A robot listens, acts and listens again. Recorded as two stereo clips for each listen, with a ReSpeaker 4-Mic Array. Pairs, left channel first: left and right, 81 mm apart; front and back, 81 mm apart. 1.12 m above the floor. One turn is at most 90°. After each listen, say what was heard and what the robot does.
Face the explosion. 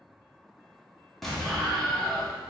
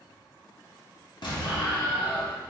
Facing the explosion, 1 to 2 m away.